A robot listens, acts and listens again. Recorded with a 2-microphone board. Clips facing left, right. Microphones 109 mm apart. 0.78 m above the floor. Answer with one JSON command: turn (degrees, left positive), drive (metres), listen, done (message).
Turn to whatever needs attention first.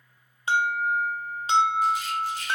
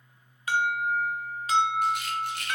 {"turn": 25}
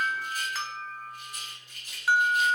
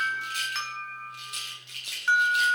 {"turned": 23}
{"done": "Facing the alarm."}